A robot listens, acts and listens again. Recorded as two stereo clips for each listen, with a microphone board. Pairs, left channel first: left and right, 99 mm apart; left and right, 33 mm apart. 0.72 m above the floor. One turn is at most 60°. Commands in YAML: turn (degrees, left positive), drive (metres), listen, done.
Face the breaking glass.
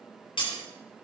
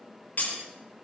turn: 55
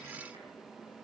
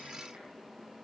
listen: true
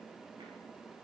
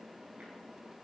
done: "I heard breaking glass, but can't make it out now. It was about straight ahead or 70° left."